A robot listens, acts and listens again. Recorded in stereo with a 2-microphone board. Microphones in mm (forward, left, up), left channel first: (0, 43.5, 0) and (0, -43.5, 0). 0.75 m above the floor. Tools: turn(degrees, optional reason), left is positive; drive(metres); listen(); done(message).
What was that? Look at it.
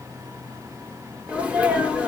turn(degrees=-30)
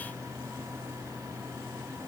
listen()
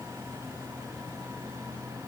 done("I heard a sneeze, but can't make it out now. It was about 15° left or 135° right.")